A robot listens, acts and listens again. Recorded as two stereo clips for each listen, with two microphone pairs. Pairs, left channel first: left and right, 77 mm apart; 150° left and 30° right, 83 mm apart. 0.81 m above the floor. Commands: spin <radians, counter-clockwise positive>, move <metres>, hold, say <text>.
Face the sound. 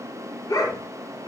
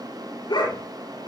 spin 2.09
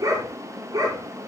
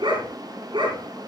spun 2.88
spin -0.96
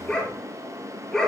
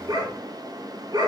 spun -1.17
say Facing the dog barking, over 4 m away.